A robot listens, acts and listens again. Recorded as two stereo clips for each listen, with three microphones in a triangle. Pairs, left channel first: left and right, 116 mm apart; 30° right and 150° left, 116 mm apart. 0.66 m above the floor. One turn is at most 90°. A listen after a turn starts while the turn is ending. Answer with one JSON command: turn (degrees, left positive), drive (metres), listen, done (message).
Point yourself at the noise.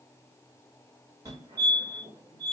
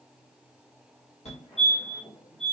{"turn": -35}
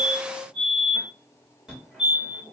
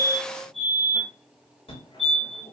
{"done": "Found it: a fire alarm, straight ahead, over 4 m away."}